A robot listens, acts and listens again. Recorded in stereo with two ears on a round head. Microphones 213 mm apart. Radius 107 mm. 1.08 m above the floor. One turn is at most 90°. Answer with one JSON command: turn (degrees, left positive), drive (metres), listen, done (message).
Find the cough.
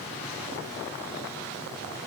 {"listen": true}
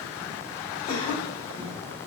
{"turn": 25}
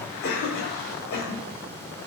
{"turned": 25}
{"turn": 90}
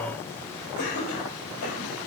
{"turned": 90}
{"turn": 70}
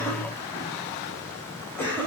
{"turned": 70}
{"turn": 10}
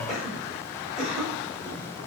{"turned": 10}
{"done": "Found it: a cough, straight ahead, 2 to 4 m away."}